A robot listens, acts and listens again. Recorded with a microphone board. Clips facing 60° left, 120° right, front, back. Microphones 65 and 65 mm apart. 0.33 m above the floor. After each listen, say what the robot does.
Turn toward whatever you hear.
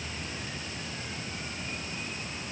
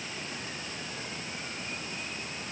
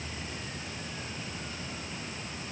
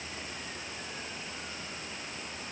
Keep listening.
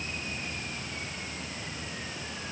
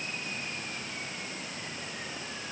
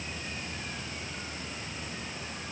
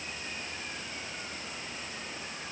Keep listening.
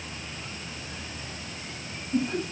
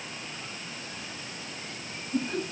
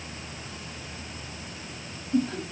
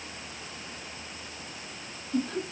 Turn 65° left.
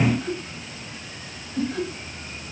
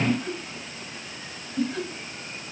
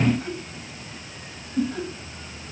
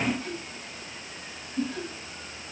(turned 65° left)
Found it: laughter, straight ahead.